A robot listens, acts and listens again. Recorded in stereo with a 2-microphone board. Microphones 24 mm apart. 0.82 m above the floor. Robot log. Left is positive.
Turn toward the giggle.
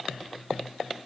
cmd idle
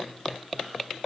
cmd idle
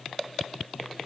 end: I can't make out a giggle.